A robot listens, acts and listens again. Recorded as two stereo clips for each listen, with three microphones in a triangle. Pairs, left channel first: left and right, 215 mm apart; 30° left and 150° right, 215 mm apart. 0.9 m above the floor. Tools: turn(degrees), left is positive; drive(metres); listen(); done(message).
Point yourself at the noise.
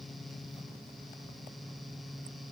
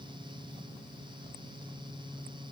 listen()
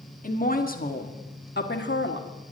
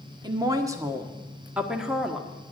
turn(degrees=120)
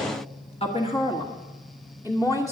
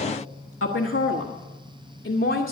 turn(degrees=15)
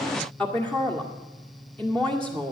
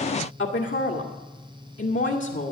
done("Found it: a woman speaking, straight ahead, 1 to 2 m away.")